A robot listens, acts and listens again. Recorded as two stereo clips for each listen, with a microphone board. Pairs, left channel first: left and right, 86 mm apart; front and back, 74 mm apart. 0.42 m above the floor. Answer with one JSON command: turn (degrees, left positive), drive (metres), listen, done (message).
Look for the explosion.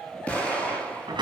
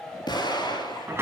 {"turn": 15}
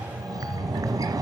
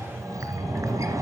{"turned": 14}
{"done": "I heard an explosion from this way, but can't make it out now."}